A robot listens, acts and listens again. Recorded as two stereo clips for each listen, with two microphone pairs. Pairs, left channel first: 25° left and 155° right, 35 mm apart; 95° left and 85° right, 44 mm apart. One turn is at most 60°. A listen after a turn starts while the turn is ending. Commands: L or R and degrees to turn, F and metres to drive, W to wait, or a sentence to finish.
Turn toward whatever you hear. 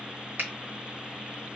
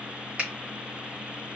R60
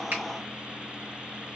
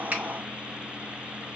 R60
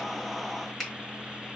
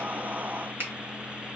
R60
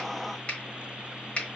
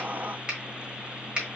R25
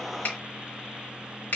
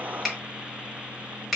Found it: a finger snap, straight ahead, 1 to 2 m away.